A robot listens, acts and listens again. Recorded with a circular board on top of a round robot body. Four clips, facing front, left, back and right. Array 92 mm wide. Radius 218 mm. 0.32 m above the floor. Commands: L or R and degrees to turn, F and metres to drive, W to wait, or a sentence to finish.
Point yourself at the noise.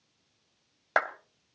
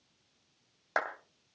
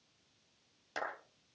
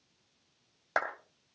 Facing the clap, 1 to 2 m away.